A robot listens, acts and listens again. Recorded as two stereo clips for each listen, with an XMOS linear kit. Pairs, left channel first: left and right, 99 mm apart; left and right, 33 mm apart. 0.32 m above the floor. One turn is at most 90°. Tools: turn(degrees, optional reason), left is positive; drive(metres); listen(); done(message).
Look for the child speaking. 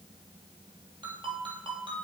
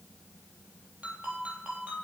listen()
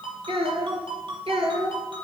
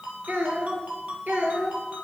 turn(degrees=-65, reason="The child speaking: about 65° right or 115° right.")
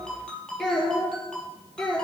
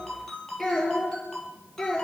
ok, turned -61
turn(degrees=10, reason="So it is at 10° left.")
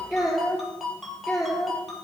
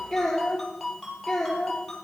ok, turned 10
done("Found it: a child speaking, straight ahead.")